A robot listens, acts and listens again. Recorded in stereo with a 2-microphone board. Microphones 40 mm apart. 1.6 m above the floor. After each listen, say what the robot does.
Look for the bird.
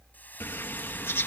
Turn 70° left.
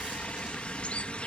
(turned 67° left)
Turn 30° left.
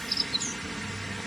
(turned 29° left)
Found it: a bird, straight ahead.